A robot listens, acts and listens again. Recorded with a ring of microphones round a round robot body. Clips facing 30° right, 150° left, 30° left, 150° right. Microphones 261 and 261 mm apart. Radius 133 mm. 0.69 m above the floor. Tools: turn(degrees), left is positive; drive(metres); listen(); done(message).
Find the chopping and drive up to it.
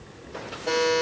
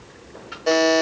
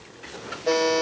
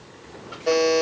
listen()
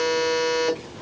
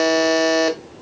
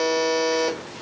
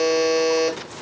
listen()
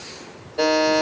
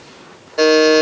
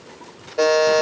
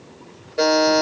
done("I can't make out chopping, only a buzzer.")